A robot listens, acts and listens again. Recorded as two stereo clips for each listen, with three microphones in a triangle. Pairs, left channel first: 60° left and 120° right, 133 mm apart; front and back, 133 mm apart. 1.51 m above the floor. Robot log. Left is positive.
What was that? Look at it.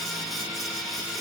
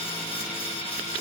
cmd idle
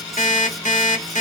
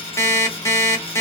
note: The alarm clock: 65° left.
cmd yaw +65
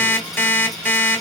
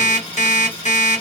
note: The alarm clock is now 15° right.
cmd yaw -15
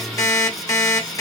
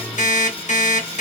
end: Found it: an alarm clock, straight ahead, 1 to 2 m away.